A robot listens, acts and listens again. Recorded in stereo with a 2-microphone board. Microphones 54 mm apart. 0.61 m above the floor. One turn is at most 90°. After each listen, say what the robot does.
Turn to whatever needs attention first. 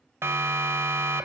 Turn 50° right.
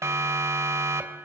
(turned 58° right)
Turn 70° right.
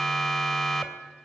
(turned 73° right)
Found it: a siren, straight ahead, 2 to 4 m away.